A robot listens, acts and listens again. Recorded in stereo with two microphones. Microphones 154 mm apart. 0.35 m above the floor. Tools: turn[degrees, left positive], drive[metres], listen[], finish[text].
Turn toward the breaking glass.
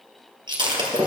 Thought: The breaking glass: about 30° right or 150° right.
Action: turn[-30]
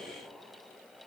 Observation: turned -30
Action: listen[]
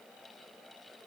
Action: finish[I heard breaking glass, but can't make it out now. It was about straight ahead or 120° right.]